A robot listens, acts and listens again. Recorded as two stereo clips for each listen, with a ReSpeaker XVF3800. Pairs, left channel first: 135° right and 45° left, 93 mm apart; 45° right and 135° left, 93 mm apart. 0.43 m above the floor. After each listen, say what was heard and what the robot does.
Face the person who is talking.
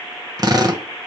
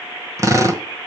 Keep listening.
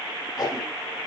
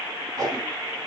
Keep listening.
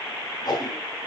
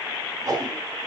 I can't make out anyone speaking, only a drill and a whoosh.